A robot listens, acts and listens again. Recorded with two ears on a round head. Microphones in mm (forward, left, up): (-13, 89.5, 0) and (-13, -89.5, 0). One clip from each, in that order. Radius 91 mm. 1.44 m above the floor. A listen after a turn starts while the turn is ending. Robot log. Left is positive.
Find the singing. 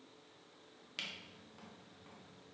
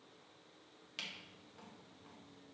cmd idle
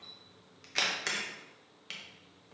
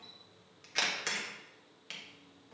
cmd idle
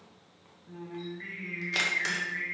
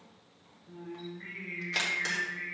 note: The singing: about 50° left or 130° left.
cmd yaw +50
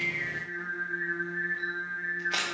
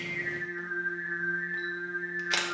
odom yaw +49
note: So it is at 80° left.
cmd yaw +80
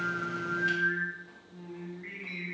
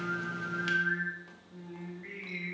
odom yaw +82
end: Facing the singing.